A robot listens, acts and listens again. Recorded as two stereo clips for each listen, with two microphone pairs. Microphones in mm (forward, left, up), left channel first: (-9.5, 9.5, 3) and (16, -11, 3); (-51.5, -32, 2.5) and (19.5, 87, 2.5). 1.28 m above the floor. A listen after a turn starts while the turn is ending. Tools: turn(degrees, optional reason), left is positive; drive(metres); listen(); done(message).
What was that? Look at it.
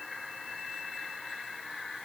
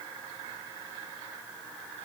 listen()
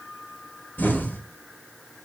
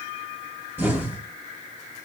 turn(degrees=135, reason="The explosion: 135° left.")
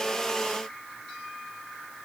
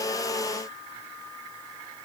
done("Facing where the explosion came from. I can't hear it now.")